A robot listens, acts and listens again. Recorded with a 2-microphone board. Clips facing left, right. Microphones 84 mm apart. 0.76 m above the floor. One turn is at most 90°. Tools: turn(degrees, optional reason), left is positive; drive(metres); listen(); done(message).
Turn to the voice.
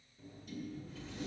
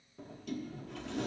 listen()
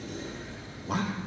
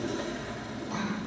turn(degrees=70, reason="The man speaking: about 70° left or 110° left.")
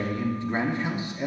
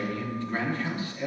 turn(degrees=20, reason="So it is at 20° left.")
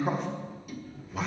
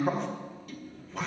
done("Facing the man speaking.")